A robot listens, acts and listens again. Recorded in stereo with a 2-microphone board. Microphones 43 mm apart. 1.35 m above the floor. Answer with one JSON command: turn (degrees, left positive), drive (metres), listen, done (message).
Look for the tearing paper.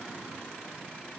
{"listen": true}
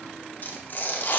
{"turn": 50}
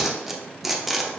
{"done": "Found it: tearing paper, straight ahead."}